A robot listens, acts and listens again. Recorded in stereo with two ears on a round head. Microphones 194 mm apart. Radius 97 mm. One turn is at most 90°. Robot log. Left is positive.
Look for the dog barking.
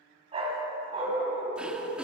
note: The dog barking: about 30° right or 150° right.
cmd yaw -30
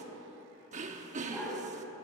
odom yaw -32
end: Facing the dog barking, 2 to 4 m away.